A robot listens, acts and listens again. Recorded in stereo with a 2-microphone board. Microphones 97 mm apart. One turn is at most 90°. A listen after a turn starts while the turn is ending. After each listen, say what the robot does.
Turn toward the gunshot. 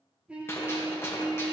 Turn 25° left.
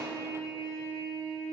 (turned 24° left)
Keep listening.
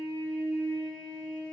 I heard a gunshot, but can't make it out now. It was about straight ahead or 130° left.